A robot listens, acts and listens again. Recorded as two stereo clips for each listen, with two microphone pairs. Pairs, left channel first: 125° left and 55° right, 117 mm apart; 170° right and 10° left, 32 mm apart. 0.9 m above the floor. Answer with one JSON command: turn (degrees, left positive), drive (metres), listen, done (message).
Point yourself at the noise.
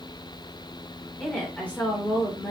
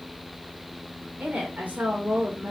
{"turn": 50}
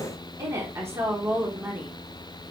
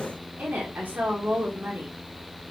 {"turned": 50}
{"turn": 15}
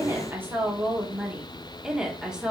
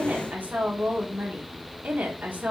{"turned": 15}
{"turn": 30}
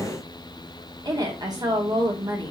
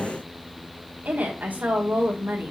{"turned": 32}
{"done": "Facing the woman speaking, 2 to 4 m away."}